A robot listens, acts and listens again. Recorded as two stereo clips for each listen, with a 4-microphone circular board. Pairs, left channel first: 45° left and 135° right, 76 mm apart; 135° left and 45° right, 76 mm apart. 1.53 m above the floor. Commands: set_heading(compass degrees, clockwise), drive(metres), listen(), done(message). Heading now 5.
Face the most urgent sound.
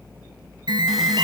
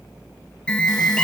set_heading(155)
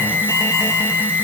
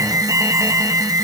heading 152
done("Facing the alarm, 2 to 4 m away.")